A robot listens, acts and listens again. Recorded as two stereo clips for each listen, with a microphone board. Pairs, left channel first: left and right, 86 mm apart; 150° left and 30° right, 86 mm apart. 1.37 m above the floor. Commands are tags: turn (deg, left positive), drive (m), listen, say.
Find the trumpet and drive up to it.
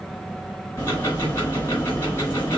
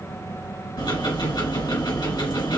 <listen/>
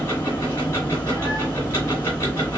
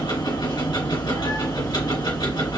<listen/>
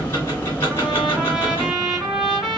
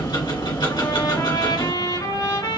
<turn deg="-175"/>
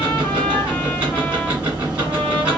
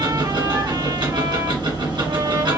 <listen/>
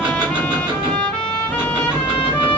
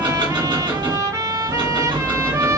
<turn deg="15"/>
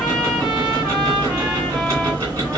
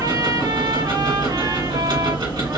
<listen/>
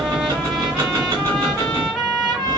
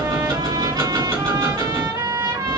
<drive m="1.0"/>
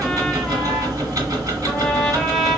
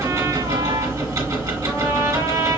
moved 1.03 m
<listen/>
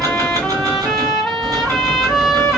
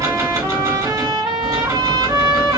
<drive m="1.0"/>
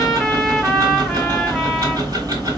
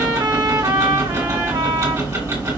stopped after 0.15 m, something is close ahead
<say>I am next to the trumpet.</say>